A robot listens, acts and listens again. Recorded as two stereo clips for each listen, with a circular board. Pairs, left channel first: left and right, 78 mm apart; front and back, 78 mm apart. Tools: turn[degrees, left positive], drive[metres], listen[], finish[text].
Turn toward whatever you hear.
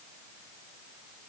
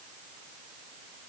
Action: listen[]
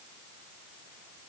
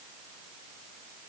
Action: listen[]
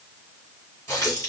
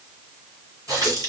Thought: The running tap: 140° left.
Action: turn[140]
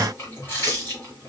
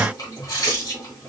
Thought: The running tap is now 30° left.
Action: turn[30]
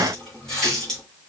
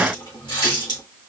Thought: The running tap is now 10° left.
Action: turn[10]
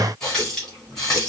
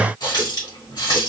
Action: finish[Facing the running tap, 2 to 4 m away.]